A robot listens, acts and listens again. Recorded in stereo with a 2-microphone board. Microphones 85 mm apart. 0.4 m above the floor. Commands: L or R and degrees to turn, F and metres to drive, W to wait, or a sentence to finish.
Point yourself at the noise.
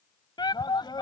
L60
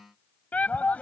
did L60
L20
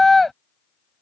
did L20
Facing the shout.